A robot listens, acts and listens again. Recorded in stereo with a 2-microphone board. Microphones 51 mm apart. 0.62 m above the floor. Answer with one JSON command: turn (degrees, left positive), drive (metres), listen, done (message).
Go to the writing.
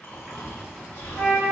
{"turn": 30}
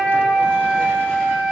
{"listen": true}
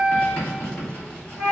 {"turn": 135}
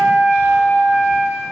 {"listen": true}
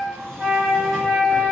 {"listen": true}
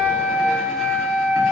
{"done": "I heard writing from this way, but can't make it out now. I did not reach it."}